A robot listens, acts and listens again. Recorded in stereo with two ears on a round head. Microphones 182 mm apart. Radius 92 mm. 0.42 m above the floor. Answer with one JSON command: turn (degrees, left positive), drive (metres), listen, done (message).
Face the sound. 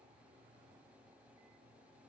{"listen": true}
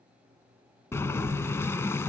{"turn": 30}
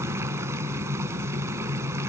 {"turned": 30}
{"turn": -15}
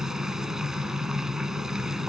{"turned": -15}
{"done": "Facing the boiling, under 1 m away."}